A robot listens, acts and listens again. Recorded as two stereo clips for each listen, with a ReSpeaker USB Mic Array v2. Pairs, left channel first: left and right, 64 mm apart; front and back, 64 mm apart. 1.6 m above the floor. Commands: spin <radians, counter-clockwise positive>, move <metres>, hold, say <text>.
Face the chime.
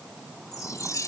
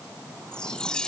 spin 1.31
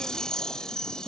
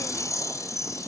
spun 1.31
spin 0.17
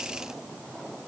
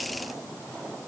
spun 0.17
hold
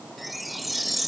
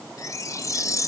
say Facing the chime.